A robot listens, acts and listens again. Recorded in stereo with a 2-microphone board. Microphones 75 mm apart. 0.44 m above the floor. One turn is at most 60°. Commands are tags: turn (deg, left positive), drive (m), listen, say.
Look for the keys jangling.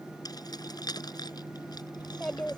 <turn deg="60"/>
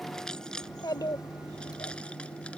<turn deg="10"/>
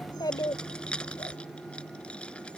<turn deg="15"/>
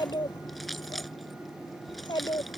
<say>Facing the keys jangling.</say>